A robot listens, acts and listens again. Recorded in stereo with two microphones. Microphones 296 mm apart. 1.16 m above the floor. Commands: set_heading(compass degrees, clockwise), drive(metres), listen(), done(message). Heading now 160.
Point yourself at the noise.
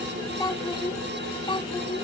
set_heading(140)
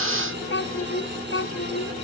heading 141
set_heading(6)
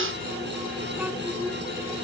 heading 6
done("Facing the child speaking.")